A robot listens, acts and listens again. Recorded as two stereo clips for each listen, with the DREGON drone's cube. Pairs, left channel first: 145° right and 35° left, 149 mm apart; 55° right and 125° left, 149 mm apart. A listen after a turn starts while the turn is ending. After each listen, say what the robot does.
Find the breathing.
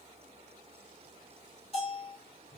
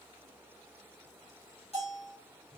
Keep listening.
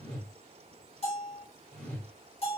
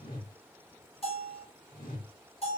Keep listening.
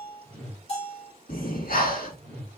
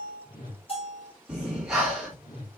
Turn 150° right.
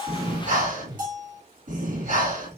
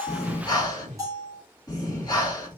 Found it: breathing, straight ahead.